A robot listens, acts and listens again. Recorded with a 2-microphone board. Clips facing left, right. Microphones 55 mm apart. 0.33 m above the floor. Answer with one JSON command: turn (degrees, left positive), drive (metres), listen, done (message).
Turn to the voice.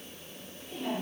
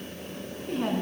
{"turn": -60}
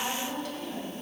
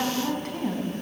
{"turn": -45}
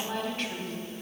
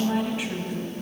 {"turn": -10}
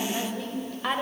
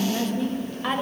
{"done": "Facing the woman speaking."}